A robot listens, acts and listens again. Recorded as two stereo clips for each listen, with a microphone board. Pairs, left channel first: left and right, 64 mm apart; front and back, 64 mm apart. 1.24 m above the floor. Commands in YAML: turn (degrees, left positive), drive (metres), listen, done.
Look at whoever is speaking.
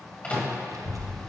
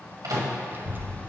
turn: -120
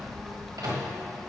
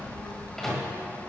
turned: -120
done: "Found it: a child speaking, straight ahead."